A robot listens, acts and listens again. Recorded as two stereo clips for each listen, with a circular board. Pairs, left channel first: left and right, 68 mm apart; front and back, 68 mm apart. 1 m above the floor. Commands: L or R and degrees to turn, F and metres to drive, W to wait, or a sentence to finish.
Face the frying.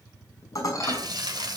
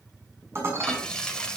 R80
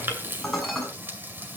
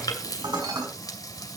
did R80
R30
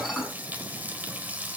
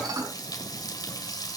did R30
R25
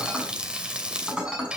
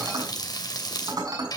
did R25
R15
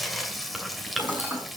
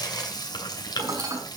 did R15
Found it: frying, straight ahead.